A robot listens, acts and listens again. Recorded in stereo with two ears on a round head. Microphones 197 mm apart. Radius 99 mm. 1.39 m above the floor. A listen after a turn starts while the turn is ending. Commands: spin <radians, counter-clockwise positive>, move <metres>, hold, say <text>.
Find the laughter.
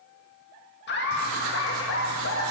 spin 1.13
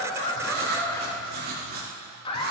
spin 0.44
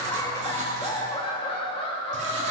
spin 0.52
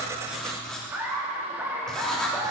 spin -0.17
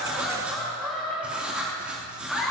say Found it: laughter, straight ahead, 2 to 4 m away.